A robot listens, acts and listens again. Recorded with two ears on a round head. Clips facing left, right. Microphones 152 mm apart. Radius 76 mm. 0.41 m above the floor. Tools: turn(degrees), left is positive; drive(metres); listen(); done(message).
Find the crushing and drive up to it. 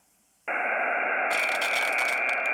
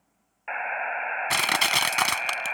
turn(degrees=-90)
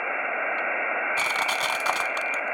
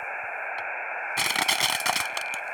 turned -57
turn(degrees=-30)
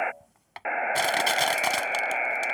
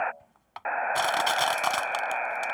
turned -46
turn(degrees=20)
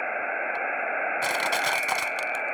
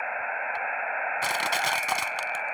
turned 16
drive(metres=1.0)
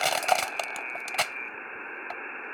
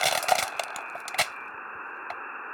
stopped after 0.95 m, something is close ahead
done("Arrived at the crushing, straight ahead.")